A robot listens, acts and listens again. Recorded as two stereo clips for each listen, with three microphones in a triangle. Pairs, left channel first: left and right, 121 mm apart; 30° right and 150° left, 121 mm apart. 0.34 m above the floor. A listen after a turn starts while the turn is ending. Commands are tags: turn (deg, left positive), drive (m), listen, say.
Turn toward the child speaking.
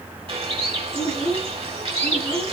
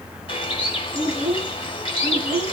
<turn deg="130"/>
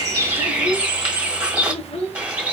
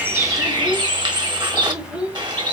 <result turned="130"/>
<turn deg="70"/>
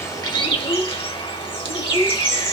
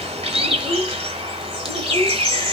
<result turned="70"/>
<turn deg="30"/>
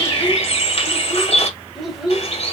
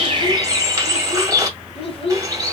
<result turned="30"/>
<say>Found it: a child speaking, straight ahead.</say>